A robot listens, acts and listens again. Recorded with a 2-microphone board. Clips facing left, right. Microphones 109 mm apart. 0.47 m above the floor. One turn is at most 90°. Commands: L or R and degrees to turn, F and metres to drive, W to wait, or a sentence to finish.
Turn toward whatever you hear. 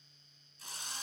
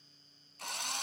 R70
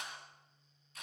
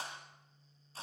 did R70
R35
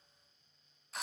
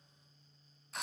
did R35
Found it: a drill, straight ahead, 2 to 4 m away.